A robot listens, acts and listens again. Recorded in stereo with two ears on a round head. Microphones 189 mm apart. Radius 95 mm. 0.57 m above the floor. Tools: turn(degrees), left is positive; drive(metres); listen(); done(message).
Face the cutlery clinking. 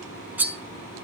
turn(degrees=-30)
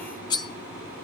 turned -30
turn(degrees=20)
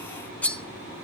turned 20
done("Found it: cutlery clinking, straight ahead.")